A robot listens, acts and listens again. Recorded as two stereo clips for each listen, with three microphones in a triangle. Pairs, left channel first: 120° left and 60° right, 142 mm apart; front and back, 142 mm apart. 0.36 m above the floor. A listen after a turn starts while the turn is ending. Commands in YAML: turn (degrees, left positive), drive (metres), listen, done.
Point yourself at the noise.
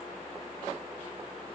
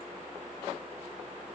listen: true
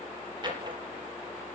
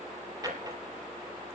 turn: -115
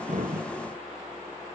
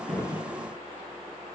listen: true
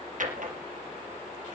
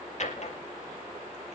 turn: -40
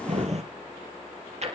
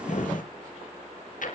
turn: -20
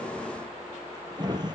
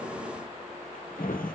done: "Facing the drawer, 2 to 4 m away."